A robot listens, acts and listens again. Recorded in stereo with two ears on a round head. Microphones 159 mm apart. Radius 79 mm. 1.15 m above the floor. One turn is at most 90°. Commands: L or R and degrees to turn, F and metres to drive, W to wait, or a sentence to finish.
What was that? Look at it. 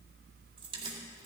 R30
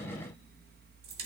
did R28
R90
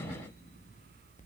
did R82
R40
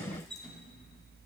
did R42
Facing the keys jangling.